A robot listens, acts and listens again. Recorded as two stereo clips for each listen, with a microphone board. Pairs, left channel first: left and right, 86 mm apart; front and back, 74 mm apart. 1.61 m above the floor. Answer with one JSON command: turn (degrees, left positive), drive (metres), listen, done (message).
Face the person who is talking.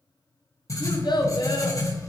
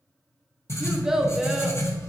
{"turn": 100}
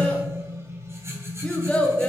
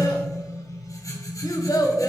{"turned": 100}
{"turn": 15}
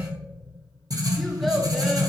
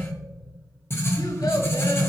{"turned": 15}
{"listen": true}
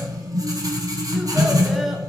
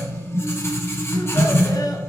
{"listen": true}
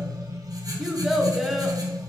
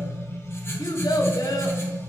{"done": "Facing the child speaking, under 1 m away."}